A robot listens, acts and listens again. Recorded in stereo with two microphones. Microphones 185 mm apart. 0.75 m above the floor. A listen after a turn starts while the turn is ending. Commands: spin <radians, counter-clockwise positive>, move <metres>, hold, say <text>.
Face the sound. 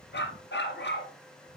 spin 1.57
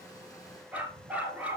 say Found it: a dog barking, straight ahead.